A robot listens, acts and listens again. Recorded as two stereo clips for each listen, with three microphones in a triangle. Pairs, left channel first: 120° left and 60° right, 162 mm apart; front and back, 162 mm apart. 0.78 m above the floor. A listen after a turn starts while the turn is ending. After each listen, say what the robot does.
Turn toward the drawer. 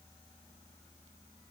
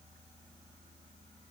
Keep listening.
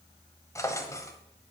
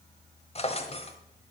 Turn 50° left.
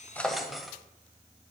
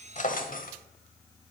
Turn 30° left.
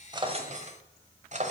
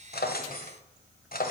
Turn 20° right.
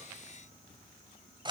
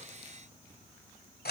Found it: a drawer, straight ahead, 1 to 2 m away.